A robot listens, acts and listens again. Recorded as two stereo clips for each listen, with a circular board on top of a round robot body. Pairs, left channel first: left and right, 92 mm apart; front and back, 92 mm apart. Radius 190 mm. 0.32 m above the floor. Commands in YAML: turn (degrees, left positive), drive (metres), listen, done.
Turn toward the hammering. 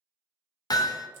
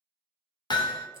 turn: 40
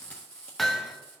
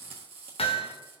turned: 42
done: "Facing the hammering."